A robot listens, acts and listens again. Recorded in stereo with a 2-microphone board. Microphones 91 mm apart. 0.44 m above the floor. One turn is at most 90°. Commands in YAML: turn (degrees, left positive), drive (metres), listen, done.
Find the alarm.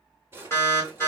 turn: 30
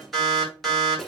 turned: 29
done: "Facing the alarm, 1 to 2 m away."